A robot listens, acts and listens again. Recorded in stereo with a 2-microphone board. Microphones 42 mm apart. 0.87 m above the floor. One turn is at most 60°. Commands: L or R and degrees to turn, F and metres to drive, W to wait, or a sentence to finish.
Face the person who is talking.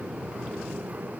W
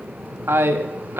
R60
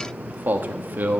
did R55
R50
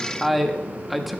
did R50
Found it: a man speaking, straight ahead.